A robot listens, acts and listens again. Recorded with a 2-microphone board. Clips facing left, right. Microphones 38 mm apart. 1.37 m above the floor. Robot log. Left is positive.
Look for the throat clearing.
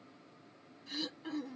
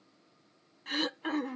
note: The throat clearing: about 55° right or 125° right.
cmd yaw -55
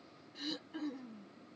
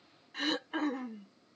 note: So it is at 70° right.
cmd yaw -70
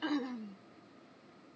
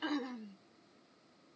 end: Facing the throat clearing.